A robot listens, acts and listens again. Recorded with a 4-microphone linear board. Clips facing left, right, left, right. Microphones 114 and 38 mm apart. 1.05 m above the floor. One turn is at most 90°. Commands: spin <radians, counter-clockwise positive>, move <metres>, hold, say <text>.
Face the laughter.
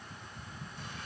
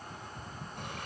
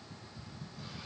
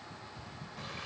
hold
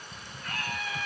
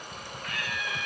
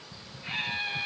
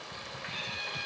spin 0.61
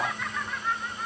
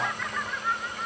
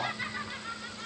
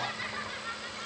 hold
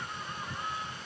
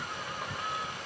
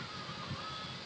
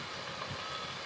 hold
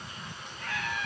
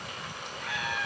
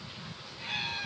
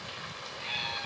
spin -0.17
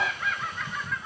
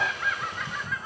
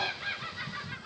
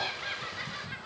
spin -0.17
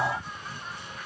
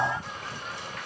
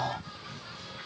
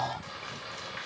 hold
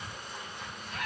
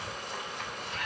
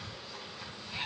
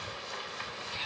hold
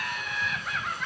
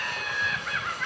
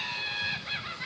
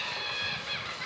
say Facing the laughter.